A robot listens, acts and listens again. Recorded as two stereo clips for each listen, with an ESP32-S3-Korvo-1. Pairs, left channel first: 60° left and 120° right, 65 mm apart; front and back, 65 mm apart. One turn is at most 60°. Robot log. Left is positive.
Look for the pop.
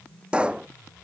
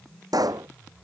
note: The pop: 165° left.
cmd yaw +60
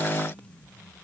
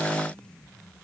note: Nothing new. It was at 105° left.
cmd yaw +60
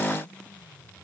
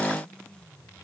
note: Nothing new. It was at 45° left.
cmd yaw +45
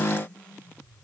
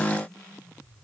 end: Facing where the pop came from. I can't hear it now.